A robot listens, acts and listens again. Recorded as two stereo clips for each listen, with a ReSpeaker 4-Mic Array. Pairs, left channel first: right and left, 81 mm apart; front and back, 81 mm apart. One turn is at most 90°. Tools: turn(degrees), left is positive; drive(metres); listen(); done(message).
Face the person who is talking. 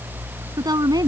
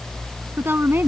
turn(degrees=90)
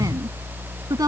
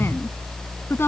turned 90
turn(degrees=30)
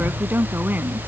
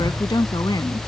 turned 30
turn(degrees=25)
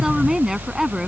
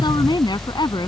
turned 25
done("Facing the woman speaking.")